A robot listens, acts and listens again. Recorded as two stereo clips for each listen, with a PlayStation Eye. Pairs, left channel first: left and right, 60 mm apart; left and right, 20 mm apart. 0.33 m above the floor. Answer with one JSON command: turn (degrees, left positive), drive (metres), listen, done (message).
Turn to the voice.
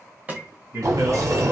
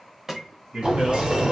{"turn": -60}
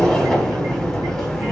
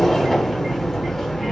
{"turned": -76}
{"listen": true}
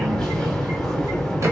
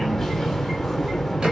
{"listen": true}
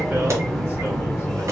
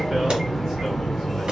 {"done": "I heard a man speaking, but can't make it out now. It was about 20° left or 45° right."}